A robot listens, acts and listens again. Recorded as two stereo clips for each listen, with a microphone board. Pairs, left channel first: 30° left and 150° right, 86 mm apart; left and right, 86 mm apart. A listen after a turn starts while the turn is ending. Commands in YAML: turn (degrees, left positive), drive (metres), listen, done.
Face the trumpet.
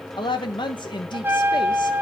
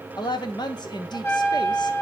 turn: 145
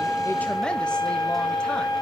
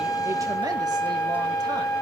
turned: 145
turn: 40
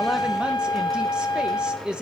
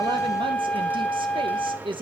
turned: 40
turn: 20
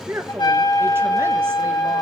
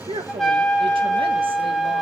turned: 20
done: "Found it: a trumpet, straight ahead, 2 to 4 m away."